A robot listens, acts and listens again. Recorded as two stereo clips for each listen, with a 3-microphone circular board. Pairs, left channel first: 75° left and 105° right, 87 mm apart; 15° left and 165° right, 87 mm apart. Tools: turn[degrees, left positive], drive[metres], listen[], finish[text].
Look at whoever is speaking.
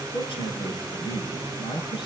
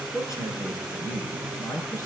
Thought: The man speaking: 65° left.
Action: turn[65]
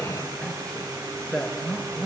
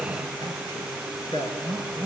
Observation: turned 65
Action: finish[Found it: a man speaking, straight ahead.]